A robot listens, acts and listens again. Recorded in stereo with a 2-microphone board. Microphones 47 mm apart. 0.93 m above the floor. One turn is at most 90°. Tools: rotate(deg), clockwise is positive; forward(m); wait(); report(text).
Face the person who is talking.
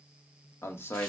rotate(-60)
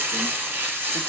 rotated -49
wait()
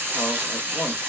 wait()
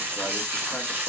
report("I heard a man speaking, but can't make it out now. It was about 15° left or 70° left.")